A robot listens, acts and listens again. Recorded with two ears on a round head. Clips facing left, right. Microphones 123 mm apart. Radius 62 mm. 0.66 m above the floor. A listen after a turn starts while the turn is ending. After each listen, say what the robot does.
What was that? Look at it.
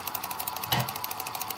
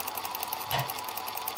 Turn 90° left.
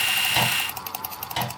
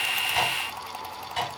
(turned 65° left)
Turn 35° left.
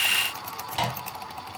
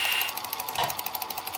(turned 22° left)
Turn 10° left.
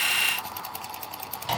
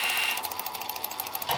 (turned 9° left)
Found it: a microwave, straight ahead, 2 to 4 m away.